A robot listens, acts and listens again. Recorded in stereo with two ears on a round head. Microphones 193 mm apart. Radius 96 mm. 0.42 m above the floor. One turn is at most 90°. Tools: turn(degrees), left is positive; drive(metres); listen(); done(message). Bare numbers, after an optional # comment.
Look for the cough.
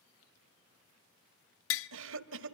# The cough: about 60° right or 120° right.
turn(-60)
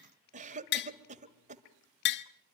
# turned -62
# So it is at 40° right.
turn(-40)
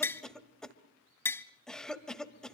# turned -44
done("Facing the cough, 1 to 2 m away.")